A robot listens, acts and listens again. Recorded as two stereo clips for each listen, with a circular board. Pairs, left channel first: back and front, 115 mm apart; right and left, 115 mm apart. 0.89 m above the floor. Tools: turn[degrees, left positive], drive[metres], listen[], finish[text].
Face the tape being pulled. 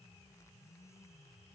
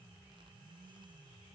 Action: listen[]
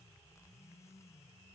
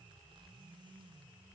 Action: listen[]
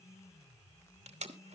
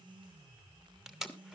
Action: finish[Facing the tape being pulled.]